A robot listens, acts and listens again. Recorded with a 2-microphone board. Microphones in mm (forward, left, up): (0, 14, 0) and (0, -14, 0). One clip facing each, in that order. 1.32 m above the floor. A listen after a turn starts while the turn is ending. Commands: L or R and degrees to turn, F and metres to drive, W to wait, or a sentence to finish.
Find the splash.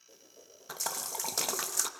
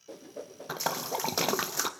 R20
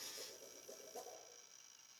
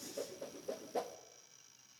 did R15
W
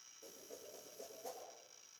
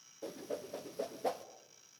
I heard a splash, but can't make it out now. It was about 5° right or 145° right.